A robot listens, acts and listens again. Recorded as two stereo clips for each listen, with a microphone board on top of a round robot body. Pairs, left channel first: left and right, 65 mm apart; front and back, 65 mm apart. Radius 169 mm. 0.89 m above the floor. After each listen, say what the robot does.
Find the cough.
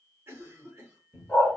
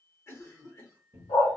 Turn 40° right.
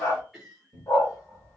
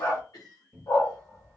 Facing the cough.